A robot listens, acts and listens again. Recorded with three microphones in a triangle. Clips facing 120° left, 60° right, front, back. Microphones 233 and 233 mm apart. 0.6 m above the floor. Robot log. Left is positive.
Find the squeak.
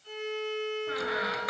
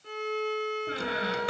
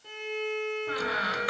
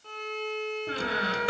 note: The squeak: 120° right.
cmd yaw -120
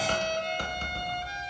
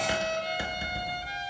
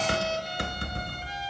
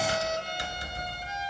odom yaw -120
note: The squeak is now 20° left.
cmd yaw +20
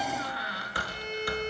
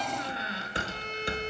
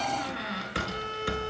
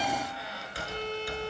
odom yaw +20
end: Facing the squeak, 1 to 2 m away.